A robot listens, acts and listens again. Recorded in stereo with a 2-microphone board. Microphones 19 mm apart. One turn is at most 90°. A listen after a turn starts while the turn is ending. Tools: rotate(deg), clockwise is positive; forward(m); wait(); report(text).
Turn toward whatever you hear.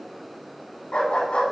rotate(-70)
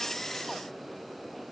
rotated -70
wait()
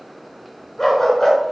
rotate(-15)
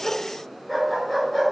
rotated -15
report("Found it: a dog barking, straight ahead.")